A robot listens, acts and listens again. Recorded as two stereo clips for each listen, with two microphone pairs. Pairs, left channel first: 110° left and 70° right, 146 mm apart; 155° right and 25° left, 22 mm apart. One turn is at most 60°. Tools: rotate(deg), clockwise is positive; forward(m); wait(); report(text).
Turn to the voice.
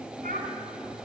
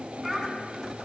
rotate(55)
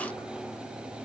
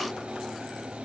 wait()
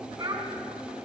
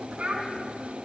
rotate(10)
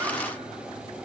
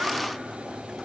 wait()
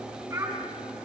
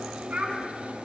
report("Found it: a child speaking, straight ahead, over 4 m away.")